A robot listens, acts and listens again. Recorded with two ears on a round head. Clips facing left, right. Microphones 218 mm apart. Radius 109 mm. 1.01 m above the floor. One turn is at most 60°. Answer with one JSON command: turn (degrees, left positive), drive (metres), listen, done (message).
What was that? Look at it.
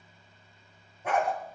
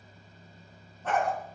{"turn": 30}
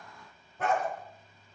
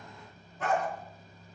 {"turn": 60}
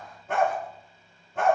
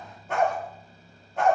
{"turn": 45}
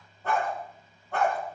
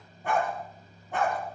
{"turn": -15}
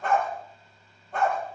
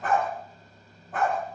{"done": "Facing the dog barking, over 4 m away."}